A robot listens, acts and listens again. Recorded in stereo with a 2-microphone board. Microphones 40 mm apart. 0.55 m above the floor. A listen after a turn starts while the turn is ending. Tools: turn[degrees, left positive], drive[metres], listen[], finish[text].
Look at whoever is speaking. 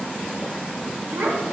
Action: turn[-90]
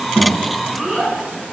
Action: finish[Found it: a child speaking, straight ahead.]